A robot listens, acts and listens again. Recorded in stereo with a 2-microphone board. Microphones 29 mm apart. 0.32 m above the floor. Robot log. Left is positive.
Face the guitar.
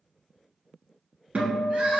note: The guitar: about 55° right or 125° right.
cmd yaw -55
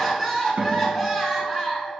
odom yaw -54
note: So it is at 70° right.
cmd yaw -70
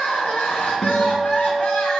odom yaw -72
end: Found it: a guitar, straight ahead, 1 to 2 m away.